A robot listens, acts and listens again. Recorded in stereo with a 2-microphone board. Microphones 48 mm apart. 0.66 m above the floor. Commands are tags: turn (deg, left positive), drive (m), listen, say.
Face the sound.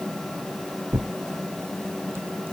<turn deg="-55"/>
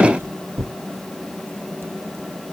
<turn deg="-70"/>
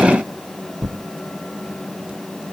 <turn deg="-20"/>
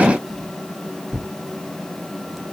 <say>Facing the tearing paper, under 1 m away.</say>